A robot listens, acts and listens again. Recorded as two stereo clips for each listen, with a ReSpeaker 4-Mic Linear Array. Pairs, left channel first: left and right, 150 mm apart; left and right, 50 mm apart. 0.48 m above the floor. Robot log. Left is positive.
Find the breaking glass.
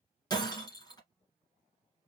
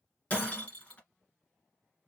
note: The breaking glass: about 25° left or 155° left.
cmd yaw +25
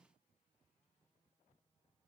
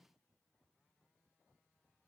cmd idle
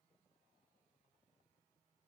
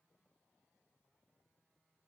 end: I heard breaking glass, but can't make it out now. It was about straight ahead or 130° left.